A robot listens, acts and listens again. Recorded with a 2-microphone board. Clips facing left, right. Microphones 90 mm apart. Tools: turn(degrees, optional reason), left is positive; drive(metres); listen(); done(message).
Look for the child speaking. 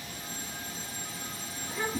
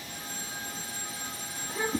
turn(degrees=-35, reason="The child speaking: about 35° right or 145° right.")
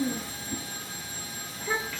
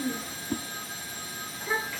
turn(degrees=-10, reason="So it is at 10° right.")
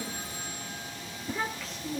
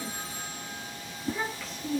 turn(degrees=-10, reason="The child speaking is now 10° right.")
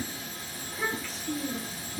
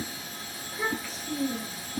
done("Facing the child speaking, over 4 m away.")